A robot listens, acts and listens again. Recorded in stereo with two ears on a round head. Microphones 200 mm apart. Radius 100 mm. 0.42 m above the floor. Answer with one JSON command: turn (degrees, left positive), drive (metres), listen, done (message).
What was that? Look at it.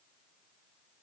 {"listen": true}
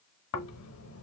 {"turn": 70}
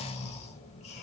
{"turn": 30}
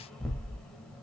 {"done": "Found it: snoring, straight ahead."}